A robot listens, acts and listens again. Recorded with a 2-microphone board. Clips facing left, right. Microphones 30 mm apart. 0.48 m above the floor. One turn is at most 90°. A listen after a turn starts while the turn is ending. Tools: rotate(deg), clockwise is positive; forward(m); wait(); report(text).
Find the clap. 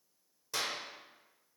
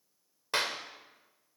rotate(50)
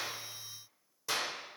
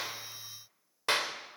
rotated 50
rotate(65)
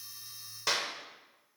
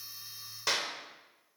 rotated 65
report("Found it: a clap, straight ahead.")